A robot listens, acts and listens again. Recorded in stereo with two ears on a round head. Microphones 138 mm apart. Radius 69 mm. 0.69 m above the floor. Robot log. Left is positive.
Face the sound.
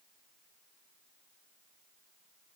cmd idle
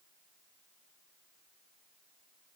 cmd idle
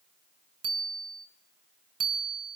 note: The bicycle bell: about 35° right or 145° right.
cmd yaw -35
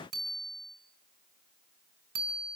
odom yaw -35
note: So it is at 115° right.
cmd yaw -115
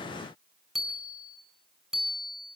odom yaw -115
end: Facing the bicycle bell, over 4 m away.